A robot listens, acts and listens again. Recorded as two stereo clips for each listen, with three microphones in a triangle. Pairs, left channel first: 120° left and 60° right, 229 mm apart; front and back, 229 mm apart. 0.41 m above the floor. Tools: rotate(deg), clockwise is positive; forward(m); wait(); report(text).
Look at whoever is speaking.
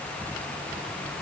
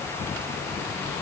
wait()
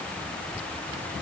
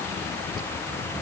wait()
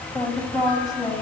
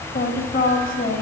rotate(-50)
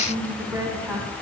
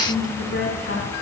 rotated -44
rotate(-20)
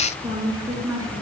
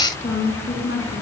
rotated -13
rotate(-15)
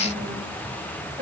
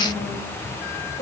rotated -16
report("Found it: a woman speaking, straight ahead, over 4 m away.")